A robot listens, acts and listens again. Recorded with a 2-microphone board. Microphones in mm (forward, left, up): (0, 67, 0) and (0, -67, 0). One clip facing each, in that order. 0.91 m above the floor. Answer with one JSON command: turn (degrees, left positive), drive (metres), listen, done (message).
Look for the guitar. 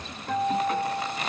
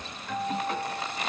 {"turn": 50}
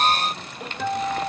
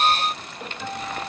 {"turn": 75}
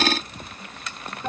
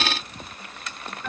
{"turn": 30}
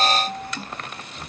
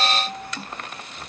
{"done": "Facing the guitar."}